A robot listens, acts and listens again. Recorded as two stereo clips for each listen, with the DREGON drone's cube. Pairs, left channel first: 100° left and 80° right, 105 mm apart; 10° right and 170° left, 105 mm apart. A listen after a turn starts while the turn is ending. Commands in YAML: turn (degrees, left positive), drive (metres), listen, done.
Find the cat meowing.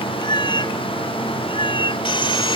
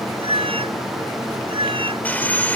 turn: 135
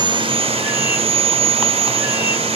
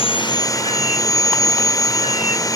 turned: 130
listen: true
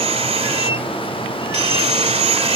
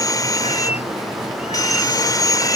listen: true
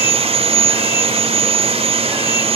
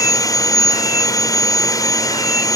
done: "Facing where the cat meowing came from. I can't hear it now."